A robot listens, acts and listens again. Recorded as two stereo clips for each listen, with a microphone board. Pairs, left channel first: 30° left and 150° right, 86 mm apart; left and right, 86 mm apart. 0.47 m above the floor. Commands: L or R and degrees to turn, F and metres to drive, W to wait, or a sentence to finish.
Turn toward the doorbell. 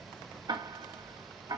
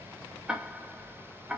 W
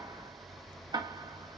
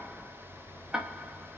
W
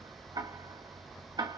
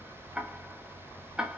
I can't make out a doorbell to turn to.